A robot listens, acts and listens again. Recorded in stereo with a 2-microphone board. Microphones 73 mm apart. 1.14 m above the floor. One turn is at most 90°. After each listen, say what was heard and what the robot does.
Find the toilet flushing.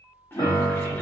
The toilet flushing: about 30° left or 150° left. Turn 30° left.
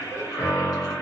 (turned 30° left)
So it is at 120° left. Turn 90° left.
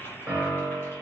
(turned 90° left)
The toilet flushing is now 35° left. Turn 35° left.
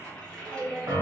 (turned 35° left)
The toilet flushing is now 10° left. Turn 10° left.
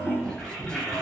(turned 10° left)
Found it: a toilet flushing, straight ahead.